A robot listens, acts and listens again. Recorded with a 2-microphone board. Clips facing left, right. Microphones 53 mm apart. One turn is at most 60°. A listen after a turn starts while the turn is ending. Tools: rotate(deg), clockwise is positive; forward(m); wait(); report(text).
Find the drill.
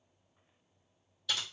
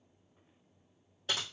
wait()
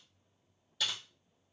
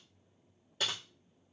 wait()
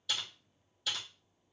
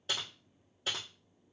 report("I can't make out a drill, only typing on a keyboard.")